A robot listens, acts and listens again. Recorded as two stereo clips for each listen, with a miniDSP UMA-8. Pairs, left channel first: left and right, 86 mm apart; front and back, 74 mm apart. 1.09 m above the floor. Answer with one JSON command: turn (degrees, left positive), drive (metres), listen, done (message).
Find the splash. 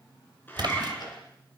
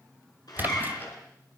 {"turn": -115}
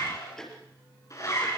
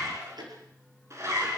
{"done": "I heard a splash from this way, but can't make it out now."}